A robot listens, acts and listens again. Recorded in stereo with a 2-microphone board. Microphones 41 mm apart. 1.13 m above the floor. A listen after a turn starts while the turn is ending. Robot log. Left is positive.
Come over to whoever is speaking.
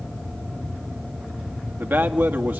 note: The man speaking: about 60° right or 120° right.
cmd yaw -60
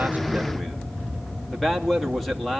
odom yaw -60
cmd fwd 1.0
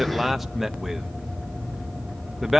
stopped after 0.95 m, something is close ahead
end: Arrived at the man speaking, straight ahead.